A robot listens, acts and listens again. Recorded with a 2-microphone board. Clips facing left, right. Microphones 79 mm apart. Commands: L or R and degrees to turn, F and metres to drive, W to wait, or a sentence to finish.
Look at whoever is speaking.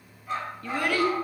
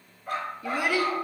R30
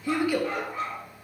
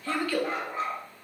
L15
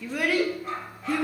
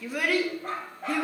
Facing the child speaking.